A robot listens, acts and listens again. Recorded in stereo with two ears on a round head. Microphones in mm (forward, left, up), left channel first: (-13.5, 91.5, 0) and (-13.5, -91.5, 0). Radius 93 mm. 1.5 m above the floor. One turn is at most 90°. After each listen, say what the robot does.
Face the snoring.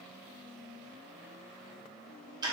Keep listening.
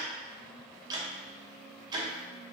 Keep listening.
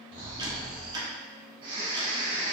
Turn 25° right.
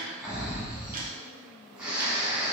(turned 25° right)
Found it: snoring, straight ahead, 1 to 2 m away.